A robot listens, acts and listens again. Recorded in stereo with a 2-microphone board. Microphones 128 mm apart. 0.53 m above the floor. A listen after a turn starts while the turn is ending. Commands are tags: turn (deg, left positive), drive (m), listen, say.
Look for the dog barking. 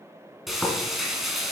<listen/>
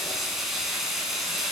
<listen/>
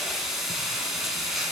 <say>I can't make out a dog barking, only frying.</say>